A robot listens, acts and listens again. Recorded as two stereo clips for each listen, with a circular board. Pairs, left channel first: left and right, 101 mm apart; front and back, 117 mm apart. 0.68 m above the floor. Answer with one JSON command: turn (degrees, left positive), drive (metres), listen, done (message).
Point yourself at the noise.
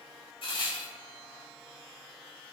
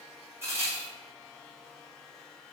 {"turn": 115}
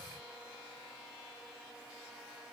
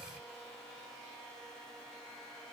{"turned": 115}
{"done": "Facing where the crack came from. I can't hear it now."}